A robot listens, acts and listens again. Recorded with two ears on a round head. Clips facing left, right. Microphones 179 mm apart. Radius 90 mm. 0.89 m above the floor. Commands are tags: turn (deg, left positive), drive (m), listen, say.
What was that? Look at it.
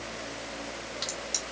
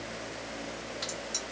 <turn deg="25"/>
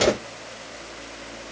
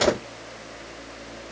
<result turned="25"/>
<say>Found it: a crack, straight ahead, 1 to 2 m away.</say>